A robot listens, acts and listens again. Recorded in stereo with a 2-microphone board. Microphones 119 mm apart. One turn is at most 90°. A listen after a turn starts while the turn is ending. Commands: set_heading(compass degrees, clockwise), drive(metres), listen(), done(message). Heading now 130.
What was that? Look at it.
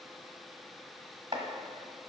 set_heading(170)
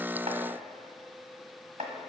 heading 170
set_heading(260)
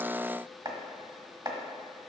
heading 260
set_heading(300)
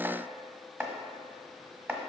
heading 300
set_heading(315)
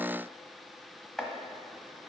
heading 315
done("Facing the chopping, 1 to 2 m away.")